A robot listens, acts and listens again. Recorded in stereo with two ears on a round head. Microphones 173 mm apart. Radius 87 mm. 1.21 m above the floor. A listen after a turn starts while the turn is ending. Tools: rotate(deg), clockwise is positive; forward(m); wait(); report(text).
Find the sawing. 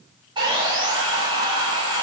rotate(25)
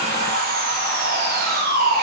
rotate(125)
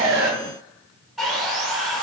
report("Found it: sawing, straight ahead, 1 to 2 m away.")